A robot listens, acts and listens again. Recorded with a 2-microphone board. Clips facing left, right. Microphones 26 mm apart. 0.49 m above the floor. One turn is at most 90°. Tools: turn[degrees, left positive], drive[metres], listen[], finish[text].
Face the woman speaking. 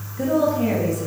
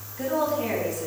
Thought: The woman speaking: about 20° left or 160° left.
Action: turn[20]
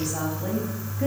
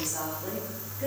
Thought: The woman speaking: about 40° left or 140° left.
Action: turn[40]
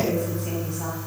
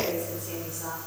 Thought: So it is at 105° left.
Action: turn[90]
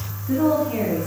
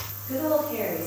Thought: The woman speaking is now 25° left.
Action: turn[25]
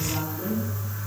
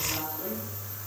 Action: finish[Found it: a woman speaking, straight ahead.]